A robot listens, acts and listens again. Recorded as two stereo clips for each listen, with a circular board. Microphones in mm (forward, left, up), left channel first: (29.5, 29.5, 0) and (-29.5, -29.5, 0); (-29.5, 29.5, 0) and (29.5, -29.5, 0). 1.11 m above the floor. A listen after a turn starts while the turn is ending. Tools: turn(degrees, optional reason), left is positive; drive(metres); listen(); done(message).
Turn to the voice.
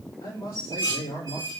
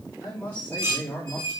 turn(degrees=60, reason="The man speaking: 60° left.")
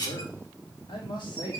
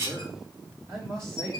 turn(degrees=15, reason="The man speaking is now 15° left.")
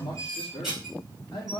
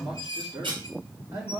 done("Facing the man speaking, 2 to 4 m away.")